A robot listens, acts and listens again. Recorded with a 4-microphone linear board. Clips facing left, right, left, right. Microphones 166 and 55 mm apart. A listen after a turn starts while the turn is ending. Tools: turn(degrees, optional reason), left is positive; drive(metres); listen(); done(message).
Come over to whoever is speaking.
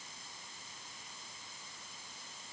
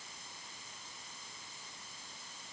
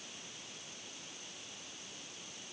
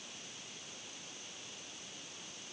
listen()
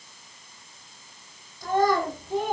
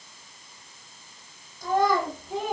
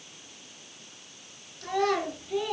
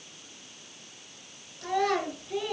turn(degrees=-30)
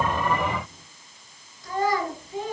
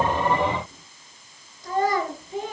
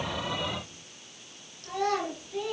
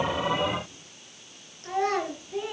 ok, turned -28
turn(degrees=-140, reason="So it is at 140° right.")
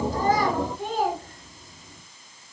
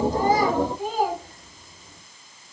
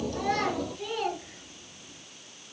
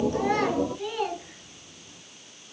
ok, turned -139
drive(metres=1.0)
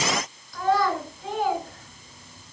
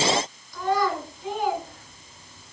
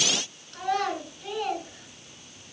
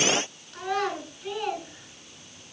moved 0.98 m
drive(metres=1.0)
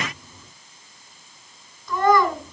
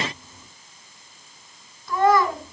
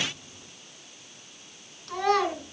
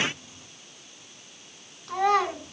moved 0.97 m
drive(metres=1.0)
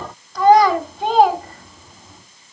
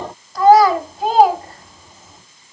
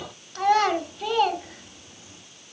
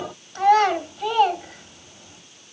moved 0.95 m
drive(metres=1.0)
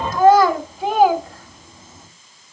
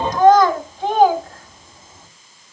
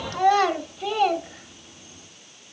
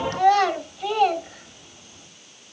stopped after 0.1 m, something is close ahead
done("I am next to the child speaking.")